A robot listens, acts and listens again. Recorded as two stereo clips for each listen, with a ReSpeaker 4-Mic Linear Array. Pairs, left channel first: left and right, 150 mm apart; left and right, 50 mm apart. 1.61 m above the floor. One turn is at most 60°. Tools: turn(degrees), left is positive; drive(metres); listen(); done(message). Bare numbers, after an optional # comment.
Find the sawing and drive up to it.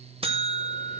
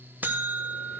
listen()
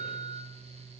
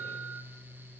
listen()
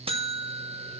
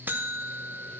done("I can't make out sawing, only a buzzer.")